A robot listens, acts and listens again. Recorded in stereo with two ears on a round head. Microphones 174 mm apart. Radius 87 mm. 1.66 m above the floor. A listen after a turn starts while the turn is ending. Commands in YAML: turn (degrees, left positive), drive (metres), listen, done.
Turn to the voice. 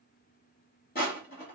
listen: true
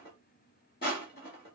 listen: true
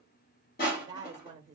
turn: -20
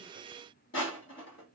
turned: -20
listen: true
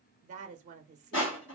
turn: -140
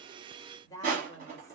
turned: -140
turn: 15
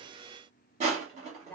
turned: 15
done: "Facing the woman speaking, 1 to 2 m away."